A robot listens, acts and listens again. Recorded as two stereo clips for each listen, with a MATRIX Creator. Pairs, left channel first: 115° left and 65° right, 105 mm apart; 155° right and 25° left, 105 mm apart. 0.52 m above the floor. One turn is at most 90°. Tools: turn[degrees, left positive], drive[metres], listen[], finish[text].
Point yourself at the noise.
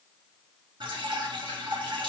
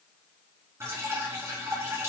Thought: The dripping: 40° right.
Action: turn[-40]
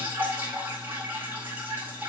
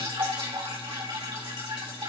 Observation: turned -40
Action: finish[Found it: dripping, straight ahead.]